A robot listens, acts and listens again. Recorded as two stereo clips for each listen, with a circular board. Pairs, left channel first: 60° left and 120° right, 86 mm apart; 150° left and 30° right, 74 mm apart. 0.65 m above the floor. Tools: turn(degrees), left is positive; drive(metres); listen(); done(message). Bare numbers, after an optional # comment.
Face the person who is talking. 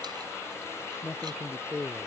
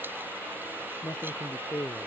# The man speaking: 145° left.
turn(145)
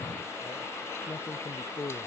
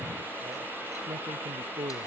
done("Found it: a man speaking, straight ahead.")